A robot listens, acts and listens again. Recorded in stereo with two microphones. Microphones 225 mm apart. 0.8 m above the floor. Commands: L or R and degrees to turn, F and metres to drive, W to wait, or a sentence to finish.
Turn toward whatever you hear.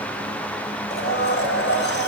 L55
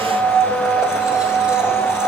Found it: a blender, straight ahead.